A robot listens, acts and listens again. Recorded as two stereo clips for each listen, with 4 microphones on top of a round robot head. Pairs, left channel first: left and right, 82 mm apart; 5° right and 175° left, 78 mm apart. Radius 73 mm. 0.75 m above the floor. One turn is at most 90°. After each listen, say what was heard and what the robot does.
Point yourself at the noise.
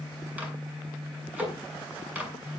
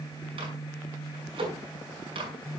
The microwave: 165° right. Turn 90° right.
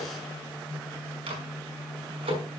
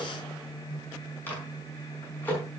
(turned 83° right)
The microwave is now 80° right. Turn 80° right.
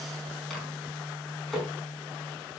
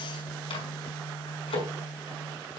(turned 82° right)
Found it: a microwave, straight ahead, over 4 m away.